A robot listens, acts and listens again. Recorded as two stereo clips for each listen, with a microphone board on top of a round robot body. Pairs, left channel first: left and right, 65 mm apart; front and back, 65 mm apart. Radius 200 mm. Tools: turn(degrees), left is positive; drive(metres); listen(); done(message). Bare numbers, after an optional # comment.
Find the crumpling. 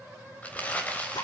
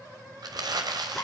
# The crumpling: 160° left.
turn(160)
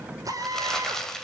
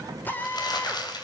# The crumpling is now 10° left.
turn(10)
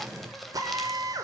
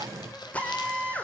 listen()
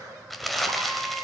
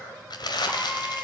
done("Facing the crumpling.")